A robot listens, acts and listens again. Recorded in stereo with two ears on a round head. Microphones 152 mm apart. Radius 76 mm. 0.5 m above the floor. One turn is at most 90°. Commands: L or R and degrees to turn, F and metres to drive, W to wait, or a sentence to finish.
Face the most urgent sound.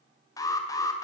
L20
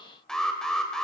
Found it: an alarm, straight ahead, 2 to 4 m away.